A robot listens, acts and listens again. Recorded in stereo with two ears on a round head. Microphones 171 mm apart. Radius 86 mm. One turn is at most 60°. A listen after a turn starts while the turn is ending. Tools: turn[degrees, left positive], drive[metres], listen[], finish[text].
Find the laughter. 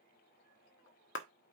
Action: listen[]
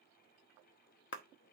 Action: listen[]
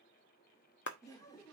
Thought: The laughter: about 20° left or 160° left.
Action: turn[20]
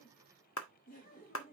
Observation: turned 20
Thought: So it is at 135° left.
Action: turn[60]
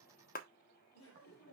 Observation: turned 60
Thought: The laughter is now 75° left.
Action: turn[60]
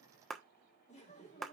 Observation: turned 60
Thought: The laughter is now 35° left.
Action: turn[35]
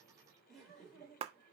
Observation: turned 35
Action: finish[Facing the laughter, 2 to 4 m away.]